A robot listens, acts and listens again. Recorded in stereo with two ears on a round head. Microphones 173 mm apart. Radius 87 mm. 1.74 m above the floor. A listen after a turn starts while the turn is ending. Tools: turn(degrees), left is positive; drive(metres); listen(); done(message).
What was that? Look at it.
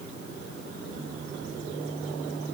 listen()
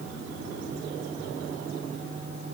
listen()
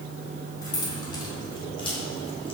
turn(degrees=30)
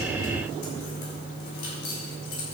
turn(degrees=120)
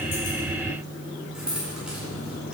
done("Found it: keys jangling, straight ahead, over 4 m away.")